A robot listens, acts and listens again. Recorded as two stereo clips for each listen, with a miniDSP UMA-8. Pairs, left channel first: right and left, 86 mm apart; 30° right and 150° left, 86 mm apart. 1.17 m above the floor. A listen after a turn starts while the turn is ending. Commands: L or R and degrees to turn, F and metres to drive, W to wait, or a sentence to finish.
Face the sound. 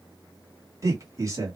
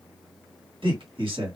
L145
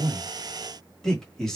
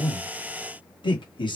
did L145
Facing the man speaking.